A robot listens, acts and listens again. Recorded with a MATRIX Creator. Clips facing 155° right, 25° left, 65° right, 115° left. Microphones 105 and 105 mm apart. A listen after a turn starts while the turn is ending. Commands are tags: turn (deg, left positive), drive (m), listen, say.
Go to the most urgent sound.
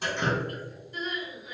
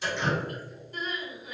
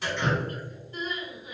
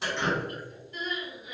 <turn deg="-10"/>
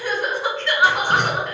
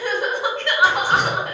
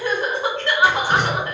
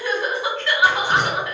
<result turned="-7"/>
<drive m="1.0"/>
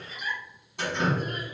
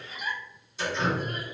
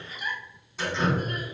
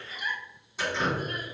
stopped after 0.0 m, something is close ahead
<turn deg="10"/>
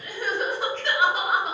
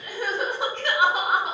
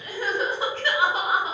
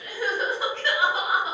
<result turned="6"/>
<say>Blocked. The crying is further on, straight ahead.</say>